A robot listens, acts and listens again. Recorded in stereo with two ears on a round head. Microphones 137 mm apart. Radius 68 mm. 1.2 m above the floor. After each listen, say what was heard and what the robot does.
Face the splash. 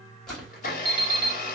Turn 30° left.
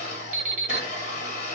Keep listening.
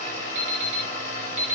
I heard a splash, but can't make it out now. It was about 25° right or 145° left.